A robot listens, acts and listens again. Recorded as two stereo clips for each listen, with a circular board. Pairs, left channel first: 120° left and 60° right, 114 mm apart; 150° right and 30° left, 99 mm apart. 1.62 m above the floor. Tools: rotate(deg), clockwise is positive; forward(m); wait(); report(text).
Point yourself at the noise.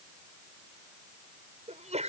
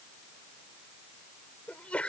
rotate(75)
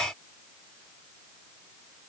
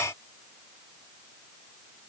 report("Facing where the sneeze came from. I can't hear it now.")